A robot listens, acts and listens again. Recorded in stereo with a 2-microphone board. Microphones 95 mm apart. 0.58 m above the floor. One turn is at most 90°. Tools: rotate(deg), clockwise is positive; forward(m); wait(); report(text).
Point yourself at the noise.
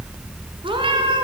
rotate(60)
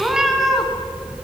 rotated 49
report("Facing the cat meowing, 2 to 4 m away.")